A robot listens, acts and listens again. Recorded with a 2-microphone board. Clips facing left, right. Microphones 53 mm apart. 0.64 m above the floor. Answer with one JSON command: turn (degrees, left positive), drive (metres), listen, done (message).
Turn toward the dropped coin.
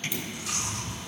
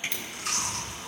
{"turn": 30}
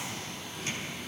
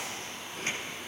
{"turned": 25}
{"listen": true}
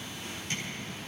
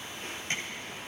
{"done": "I heard a dropped coin, but can't make it out now. It was about 15° right or 145° left."}